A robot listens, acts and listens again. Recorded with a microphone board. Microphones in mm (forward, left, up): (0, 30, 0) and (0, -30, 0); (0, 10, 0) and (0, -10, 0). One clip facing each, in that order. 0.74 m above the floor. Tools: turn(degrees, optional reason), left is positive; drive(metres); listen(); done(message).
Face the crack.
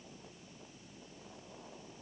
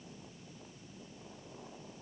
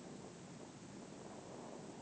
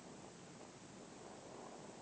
listen()
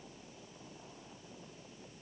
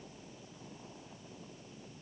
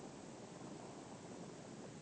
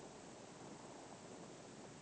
listen()
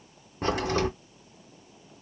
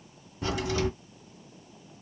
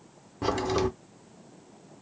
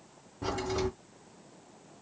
turn(degrees=45, reason="The crack: about 45° left or 135° left.")
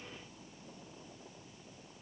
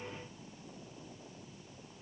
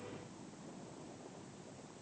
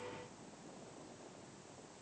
listen()
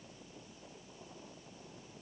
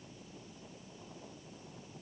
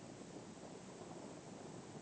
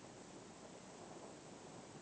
done("I heard a crack, but can't make it out now. It was about straight ahead or 90° left.")